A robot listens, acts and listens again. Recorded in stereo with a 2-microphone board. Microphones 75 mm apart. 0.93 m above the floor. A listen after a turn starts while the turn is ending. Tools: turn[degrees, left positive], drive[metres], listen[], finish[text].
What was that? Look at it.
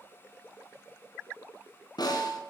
Thought: The snare drum: about 65° left or 115° left.
Action: turn[65]
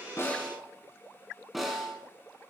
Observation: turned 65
Action: finish[Found it: a snare drum, straight ahead.]